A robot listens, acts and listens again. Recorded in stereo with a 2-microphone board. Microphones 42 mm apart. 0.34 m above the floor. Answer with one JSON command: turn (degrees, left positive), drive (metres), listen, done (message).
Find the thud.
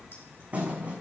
{"turn": -35}
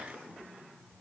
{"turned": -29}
{"listen": true}
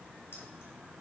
{"done": "I heard a thud, but can't make it out now. It was about 5° right or 115° right."}